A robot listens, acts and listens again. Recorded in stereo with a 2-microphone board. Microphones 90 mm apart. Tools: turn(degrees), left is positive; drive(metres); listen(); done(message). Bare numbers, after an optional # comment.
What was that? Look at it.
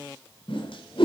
turn(90)
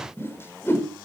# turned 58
# So it is at 25° left.
turn(25)
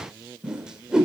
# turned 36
# The whoosh is now 10° right.
turn(-10)
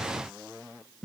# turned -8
done("Found it: a whoosh, straight ahead.")